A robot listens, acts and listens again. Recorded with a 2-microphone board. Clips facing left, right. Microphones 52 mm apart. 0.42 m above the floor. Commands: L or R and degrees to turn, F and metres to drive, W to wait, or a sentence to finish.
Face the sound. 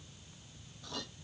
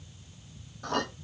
R50
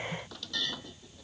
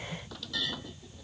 Facing the clink.